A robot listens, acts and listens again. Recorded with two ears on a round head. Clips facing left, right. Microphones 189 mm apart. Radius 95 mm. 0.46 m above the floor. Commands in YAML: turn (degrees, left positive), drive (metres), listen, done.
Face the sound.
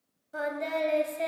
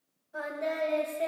turn: 55
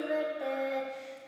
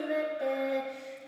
turn: -10
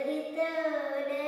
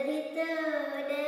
turn: -15
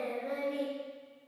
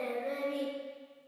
done: "Found it: singing, straight ahead."